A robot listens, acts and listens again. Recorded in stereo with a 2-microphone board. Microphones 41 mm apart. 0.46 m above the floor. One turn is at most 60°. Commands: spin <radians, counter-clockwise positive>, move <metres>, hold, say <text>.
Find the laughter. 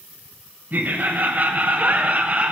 spin -0.52
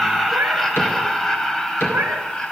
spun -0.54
spin 0.35
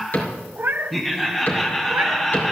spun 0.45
say Found it: laughter, straight ahead.